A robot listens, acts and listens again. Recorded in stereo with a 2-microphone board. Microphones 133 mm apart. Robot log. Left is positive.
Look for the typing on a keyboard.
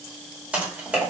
cmd yaw -30
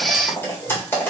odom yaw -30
note: So it is at 15° left.
cmd yaw +15
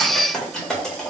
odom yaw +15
end: Facing the typing on a keyboard.